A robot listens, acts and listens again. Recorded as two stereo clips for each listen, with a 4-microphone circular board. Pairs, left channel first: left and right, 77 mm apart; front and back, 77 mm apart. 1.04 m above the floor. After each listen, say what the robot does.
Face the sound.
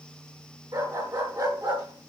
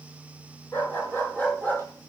Turn 70° right.
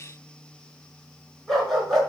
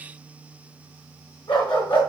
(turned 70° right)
Facing the dog barking.